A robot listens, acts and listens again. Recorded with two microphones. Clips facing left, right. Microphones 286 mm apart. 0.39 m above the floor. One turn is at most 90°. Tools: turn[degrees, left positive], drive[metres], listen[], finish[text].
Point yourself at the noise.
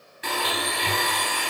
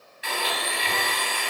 Thought: The blender: about 60° left or 120° left.
Action: turn[60]
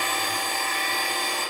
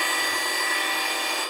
Thought: So it is at 55° left.
Action: turn[55]
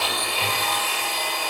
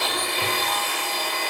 Thought: The blender is now 25° right.
Action: turn[-25]
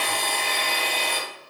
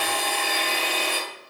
Action: finish[Found it: a blender, straight ahead, 2 to 4 m away.]